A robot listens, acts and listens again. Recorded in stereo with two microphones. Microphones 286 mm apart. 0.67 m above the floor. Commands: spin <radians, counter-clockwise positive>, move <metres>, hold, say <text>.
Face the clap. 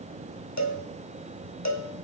hold
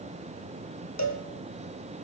hold
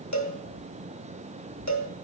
say I can't make out a clap to turn to.